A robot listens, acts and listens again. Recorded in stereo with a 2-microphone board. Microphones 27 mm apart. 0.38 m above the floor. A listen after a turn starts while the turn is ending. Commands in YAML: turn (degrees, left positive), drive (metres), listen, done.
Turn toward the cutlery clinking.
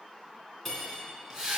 turn: 30
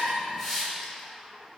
listen: true
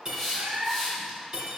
turn: -20
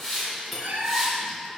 done: "Found it: cutlery clinking, straight ahead."